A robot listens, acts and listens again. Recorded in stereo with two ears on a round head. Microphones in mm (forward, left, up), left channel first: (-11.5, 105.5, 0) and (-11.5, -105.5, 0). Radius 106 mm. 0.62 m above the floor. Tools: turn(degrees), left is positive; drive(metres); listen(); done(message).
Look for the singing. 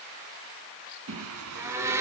turn(degrees=-70)
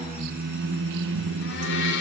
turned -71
turn(degrees=-60)
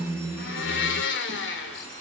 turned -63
turn(degrees=-15)
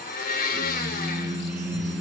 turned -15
done("Facing the singing, 2 to 4 m away.")